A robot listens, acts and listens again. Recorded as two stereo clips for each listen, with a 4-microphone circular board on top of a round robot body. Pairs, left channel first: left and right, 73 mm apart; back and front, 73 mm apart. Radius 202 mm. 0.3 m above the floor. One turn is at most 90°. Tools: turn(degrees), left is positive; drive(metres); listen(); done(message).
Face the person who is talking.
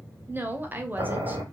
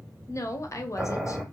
turn(degrees=-90)
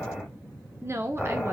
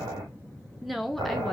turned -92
turn(degrees=-90)
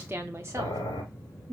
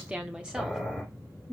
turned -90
turn(degrees=-85)
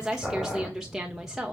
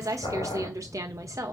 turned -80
done("Found it: a woman speaking, straight ahead.")